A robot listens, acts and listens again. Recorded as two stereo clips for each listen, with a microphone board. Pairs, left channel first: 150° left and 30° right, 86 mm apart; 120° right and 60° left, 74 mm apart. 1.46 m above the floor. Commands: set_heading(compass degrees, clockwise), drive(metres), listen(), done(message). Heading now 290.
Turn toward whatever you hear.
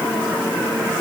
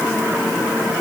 listen()
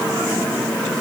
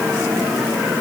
listen()
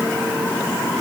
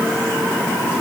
done("I can't make out anything.")